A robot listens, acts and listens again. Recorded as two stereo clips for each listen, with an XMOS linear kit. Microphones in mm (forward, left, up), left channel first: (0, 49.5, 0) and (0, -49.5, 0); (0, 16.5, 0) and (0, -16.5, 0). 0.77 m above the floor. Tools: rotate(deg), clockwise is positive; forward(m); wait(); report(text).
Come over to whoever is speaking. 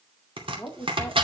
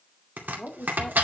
rotate(-25)
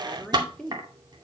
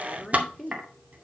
forward(1.0)
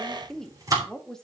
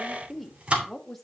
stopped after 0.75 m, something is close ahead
report("I am next to the woman speaking.")